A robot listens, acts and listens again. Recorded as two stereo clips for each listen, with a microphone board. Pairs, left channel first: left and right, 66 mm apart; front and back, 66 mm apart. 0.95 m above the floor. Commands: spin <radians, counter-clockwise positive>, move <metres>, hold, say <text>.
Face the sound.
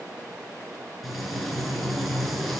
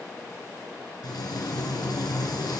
say Found it: frying, straight ahead, 2 to 4 m away.